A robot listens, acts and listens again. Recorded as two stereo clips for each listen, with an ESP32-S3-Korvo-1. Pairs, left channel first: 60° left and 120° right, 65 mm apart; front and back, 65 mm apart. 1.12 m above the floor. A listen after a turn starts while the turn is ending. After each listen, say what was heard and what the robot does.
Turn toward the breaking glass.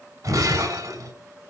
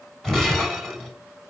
The breaking glass: 85° right. Turn 85° right.
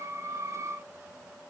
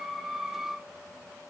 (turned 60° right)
Nothing new. It was at 25° right. Turn 25° right.
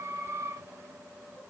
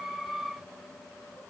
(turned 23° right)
I heard breaking glass from this way, but can't make it out now.